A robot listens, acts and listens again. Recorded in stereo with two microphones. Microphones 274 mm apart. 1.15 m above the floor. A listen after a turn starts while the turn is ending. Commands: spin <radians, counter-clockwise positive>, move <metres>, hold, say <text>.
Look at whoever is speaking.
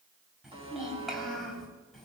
spin 0.52
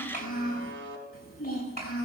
spin 2.53
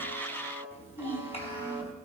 spin 0.35
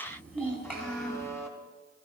say Facing the child speaking.